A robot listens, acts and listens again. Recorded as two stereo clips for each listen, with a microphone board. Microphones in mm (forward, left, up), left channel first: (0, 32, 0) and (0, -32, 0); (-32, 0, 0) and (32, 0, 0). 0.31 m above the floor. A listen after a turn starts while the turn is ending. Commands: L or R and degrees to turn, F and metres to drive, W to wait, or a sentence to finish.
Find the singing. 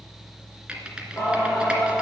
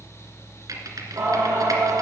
L25
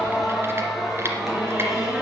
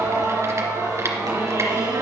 Facing the singing.